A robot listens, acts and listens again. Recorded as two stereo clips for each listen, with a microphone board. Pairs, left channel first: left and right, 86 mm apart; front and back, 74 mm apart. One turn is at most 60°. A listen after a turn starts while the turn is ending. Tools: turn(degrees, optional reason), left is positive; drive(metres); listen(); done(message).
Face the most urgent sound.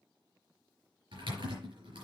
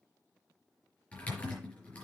listen()
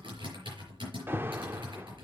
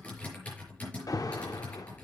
turn(degrees=-30, reason="The alarm: 30° right.")
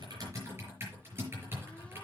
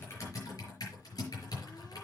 listen()
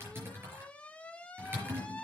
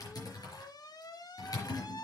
turn(degrees=15, reason="The alarm is now 15° left.")
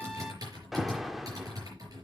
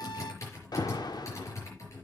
done("Facing the alarm.")